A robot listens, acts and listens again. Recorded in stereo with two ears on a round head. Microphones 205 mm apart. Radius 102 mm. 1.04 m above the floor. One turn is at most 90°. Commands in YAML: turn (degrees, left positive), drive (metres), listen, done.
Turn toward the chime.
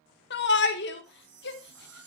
turn: -35
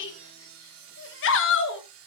listen: true
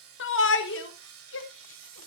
listen: true
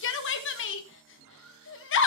done: "I heard a chime, but can't make it out now. It was about straight ahead or 110° right."